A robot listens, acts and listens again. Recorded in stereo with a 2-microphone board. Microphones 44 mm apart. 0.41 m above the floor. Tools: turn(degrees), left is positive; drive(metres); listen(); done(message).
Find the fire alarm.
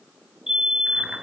turn(degrees=-30)
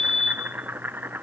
turn(degrees=20)
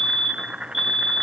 done("Facing the fire alarm.")